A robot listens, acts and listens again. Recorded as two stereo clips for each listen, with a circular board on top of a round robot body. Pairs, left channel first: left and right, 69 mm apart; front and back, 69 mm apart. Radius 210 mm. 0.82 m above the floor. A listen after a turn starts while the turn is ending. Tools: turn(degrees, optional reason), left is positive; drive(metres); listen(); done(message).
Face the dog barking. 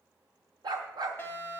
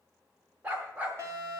turn(degrees=-110, reason="The dog barking: 110° right.")
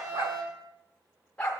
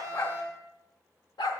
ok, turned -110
turn(degrees=15, reason="The dog barking is now 15° left.")
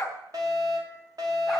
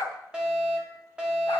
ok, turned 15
listen()
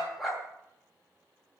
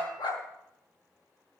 done("Found it: a dog barking, straight ahead.")